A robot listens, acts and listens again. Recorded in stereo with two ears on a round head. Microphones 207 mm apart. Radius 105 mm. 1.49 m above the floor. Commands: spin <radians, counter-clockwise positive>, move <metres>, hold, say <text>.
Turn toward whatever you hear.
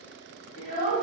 spin 0.61
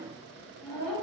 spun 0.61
spin 1.83
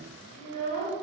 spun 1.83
spin 0.35
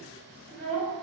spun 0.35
say Found it: a child speaking, straight ahead.